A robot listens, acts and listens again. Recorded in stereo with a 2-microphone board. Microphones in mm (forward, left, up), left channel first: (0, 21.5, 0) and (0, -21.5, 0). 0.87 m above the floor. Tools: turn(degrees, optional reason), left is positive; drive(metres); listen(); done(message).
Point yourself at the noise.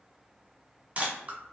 turn(degrees=-35, reason="The camera shutter: about 35° right or 145° right.")
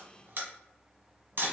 turn(degrees=-105, reason="So it is at 105° right.")
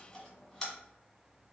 turn(degrees=10, reason="The camera shutter is now 10° left.")
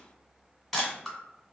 done("Facing the camera shutter, 1 to 2 m away.")